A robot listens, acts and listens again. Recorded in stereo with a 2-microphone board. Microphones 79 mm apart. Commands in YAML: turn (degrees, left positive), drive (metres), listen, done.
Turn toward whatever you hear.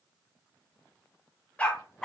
turn: 30
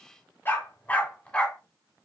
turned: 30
turn: 30
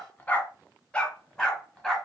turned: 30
turn: 30
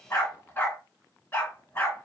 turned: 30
turn: 150
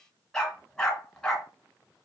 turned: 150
turn: 10
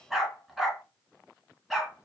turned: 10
done: "Facing the dog barking, 1 to 2 m away."